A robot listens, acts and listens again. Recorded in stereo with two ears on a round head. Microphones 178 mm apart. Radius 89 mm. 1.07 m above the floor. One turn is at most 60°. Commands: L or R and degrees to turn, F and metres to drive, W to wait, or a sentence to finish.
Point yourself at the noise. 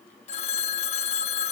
L35
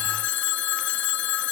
L60
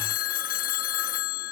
L50
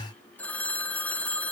L10
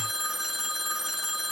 Facing the phone ringing.